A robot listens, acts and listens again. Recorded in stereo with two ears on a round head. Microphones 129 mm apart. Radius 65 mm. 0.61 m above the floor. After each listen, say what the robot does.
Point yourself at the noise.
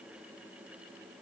Keep listening.
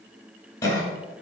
Turn 25° left.
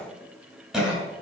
Facing the cough, 2 to 4 m away.